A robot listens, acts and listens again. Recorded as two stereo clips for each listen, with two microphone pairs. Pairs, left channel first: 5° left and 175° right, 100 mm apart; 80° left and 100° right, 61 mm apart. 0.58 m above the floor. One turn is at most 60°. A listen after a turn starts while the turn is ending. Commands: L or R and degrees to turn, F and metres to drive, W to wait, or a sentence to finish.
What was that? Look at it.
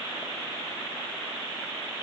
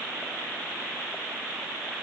W
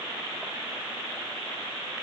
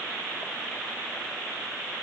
W
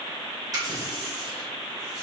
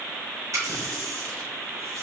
R60
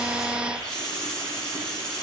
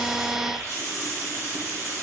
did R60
R60
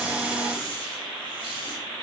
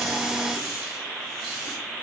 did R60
R15
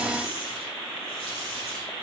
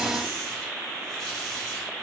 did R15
W
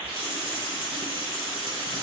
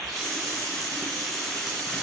R10
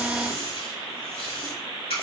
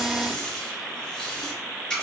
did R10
Facing the running tap.